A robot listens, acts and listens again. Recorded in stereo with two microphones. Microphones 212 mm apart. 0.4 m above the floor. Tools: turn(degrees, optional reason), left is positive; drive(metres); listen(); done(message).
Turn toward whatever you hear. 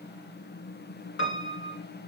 turn(degrees=90)
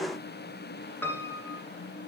turn(degrees=10, reason="So it is at 10° left.")
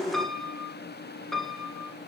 done("Facing the piano, 1 to 2 m away.")